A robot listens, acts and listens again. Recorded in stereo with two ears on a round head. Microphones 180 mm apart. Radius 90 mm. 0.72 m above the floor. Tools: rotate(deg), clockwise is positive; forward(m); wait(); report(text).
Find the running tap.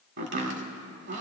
wait()
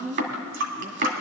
rotate(65)
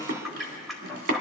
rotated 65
report("Facing the running tap.")